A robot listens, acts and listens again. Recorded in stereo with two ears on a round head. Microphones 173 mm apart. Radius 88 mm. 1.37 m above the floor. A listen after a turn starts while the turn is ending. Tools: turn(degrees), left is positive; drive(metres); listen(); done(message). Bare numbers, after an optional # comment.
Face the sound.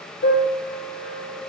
# The piano: about 75° left or 105° left.
turn(75)
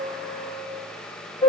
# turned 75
# So it is at 20° left.
turn(20)
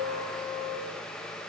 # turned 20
done("Facing the piano, 1 to 2 m away.")